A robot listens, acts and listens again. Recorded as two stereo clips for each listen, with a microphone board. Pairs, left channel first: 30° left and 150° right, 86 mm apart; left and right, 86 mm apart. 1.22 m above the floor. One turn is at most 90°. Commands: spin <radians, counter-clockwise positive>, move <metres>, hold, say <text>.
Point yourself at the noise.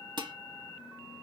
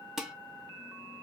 spin -1.57
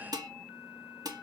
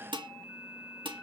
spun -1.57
spin -1.57
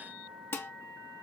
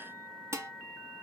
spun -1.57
spin -0.61
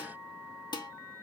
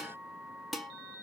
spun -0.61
say Facing the dishes clattering.